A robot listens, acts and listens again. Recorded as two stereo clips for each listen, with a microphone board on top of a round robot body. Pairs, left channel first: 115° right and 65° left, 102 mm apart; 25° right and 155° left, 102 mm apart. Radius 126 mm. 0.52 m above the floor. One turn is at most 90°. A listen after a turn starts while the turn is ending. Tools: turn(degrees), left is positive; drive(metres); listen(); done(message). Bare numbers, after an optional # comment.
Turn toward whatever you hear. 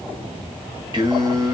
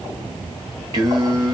# The singing: 120° left.
turn(90)
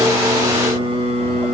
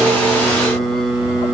# The singing is now 80° left.
turn(80)
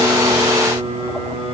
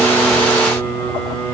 # The singing is now 55° left.
turn(55)
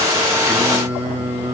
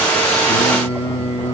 done("Facing the singing, 2 to 4 m away.")